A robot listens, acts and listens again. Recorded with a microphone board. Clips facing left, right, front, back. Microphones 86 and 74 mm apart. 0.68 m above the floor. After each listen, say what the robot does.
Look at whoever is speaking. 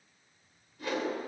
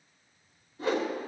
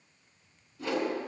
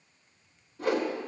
Keep listening.
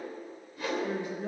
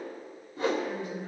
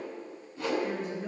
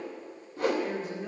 Turn 90° left.
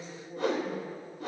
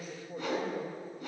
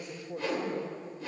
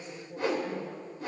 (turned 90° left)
Turn 10° right.
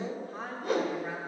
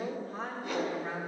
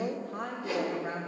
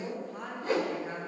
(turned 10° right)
Facing the woman speaking.